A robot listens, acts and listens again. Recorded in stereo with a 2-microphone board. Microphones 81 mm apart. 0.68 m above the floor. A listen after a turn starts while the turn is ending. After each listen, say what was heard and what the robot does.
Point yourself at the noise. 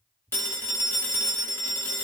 The phone ringing: about 30° left or 150° left. Turn 30° left.
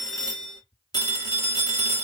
So it is at 120° left. Turn 120° left.
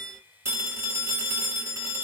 The phone ringing is now 40° right. Turn 40° right.
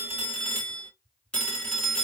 The phone ringing is now 10° left. Turn 10° left.
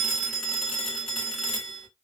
Facing the phone ringing, 1 to 2 m away.